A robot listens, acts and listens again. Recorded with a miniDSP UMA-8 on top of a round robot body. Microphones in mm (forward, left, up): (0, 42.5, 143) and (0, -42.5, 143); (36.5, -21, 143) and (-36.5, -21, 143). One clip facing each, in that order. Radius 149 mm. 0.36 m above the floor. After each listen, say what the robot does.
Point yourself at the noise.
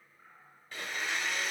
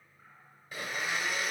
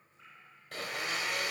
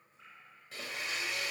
Turn 10° right.
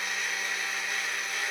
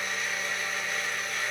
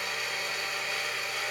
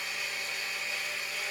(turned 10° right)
Facing the blender.